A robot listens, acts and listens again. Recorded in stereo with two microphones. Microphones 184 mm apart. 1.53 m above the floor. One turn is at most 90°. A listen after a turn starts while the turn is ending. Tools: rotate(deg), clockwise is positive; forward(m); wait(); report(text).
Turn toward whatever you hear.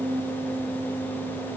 wait()
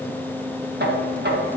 rotate(65)
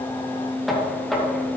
report("Facing the knocking, 1 to 2 m away.")